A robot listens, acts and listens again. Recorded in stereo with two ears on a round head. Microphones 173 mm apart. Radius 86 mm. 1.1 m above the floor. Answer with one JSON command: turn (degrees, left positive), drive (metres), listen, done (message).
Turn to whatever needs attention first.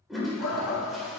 {"turn": 90}
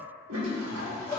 {"turn": 15}
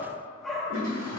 {"done": "Found it: a shout, straight ahead."}